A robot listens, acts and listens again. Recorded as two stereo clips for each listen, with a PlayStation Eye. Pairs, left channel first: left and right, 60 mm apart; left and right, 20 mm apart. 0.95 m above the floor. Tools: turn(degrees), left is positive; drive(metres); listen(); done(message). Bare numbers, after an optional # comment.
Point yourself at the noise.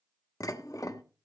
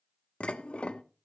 # The dishes clattering: about 75° left or 105° left.
turn(75)
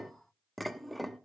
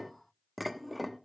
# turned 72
done("Found it: dishes clattering, straight ahead.")